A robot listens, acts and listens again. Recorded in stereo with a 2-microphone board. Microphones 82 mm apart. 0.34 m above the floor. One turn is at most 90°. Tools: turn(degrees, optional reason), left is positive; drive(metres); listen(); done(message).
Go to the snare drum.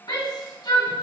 listen()
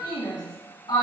listen()
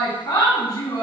done("I can't make out a snare drum, only a shout.")